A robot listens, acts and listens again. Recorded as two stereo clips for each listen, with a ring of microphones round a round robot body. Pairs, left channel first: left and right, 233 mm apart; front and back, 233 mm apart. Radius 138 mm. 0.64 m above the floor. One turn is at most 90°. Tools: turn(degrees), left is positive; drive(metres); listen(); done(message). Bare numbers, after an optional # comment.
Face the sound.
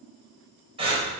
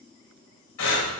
# The breathing: 25° right.
turn(-25)
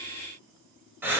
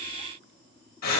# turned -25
# The breathing is now 10° right.
turn(-10)
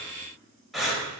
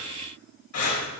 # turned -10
done("Found it: breathing, straight ahead, over 4 m away.")